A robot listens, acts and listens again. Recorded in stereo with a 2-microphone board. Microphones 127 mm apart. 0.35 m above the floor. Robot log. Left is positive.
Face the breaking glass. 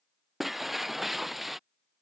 cmd yaw +30
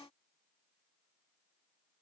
cmd idle
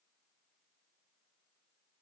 end: I heard breaking glass, but can't make it out now. It was about 30° right or 150° left.